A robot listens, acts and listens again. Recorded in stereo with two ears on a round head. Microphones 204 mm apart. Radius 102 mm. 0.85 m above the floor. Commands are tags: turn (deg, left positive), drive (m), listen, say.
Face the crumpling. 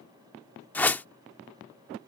<listen/>
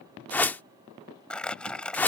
<turn deg="30"/>
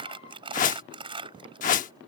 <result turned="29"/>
<turn deg="-25"/>
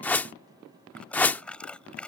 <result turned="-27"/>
<say>Found it: crumpling, straight ahead.</say>